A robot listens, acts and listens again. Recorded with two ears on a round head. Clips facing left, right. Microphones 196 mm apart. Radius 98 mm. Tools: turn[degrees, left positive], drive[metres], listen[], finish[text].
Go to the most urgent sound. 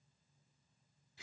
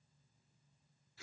Action: listen[]
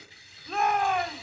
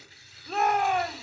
Action: turn[30]
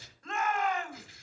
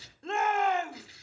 Thought: So it is at 30° right.
Action: turn[-30]
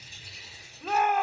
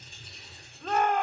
Action: drive[1.0]
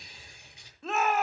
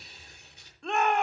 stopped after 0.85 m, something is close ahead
Action: finish[I am next to the shout.]